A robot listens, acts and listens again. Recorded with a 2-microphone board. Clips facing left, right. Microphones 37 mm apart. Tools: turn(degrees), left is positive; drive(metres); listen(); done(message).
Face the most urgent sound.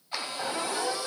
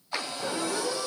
turn(degrees=55)
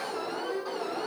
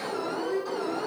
turn(degrees=10)
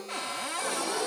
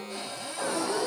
done("Found it: an alarm, straight ahead.")